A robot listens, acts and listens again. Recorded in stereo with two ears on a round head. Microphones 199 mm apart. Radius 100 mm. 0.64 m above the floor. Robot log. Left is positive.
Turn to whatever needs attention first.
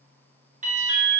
note: The alarm: about 35° right or 145° right.
cmd yaw -35
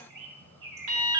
note: So it is at 105° right.
cmd yaw -105
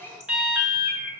end: Facing the alarm.